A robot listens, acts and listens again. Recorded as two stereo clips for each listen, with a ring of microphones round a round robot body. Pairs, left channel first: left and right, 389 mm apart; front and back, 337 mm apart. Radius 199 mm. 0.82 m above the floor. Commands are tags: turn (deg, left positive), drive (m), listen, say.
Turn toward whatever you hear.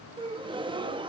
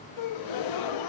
<turn deg="-15"/>
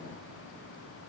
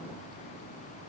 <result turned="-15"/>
<say>Facing where the gasp came from. I can't hear it now.</say>